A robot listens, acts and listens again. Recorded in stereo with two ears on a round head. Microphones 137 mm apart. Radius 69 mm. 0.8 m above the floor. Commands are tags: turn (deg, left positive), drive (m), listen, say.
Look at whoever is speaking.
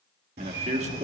<turn deg="-45"/>
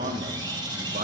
<turn deg="-75"/>
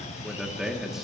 <say>Found it: a man speaking, straight ahead, 1 to 2 m away.</say>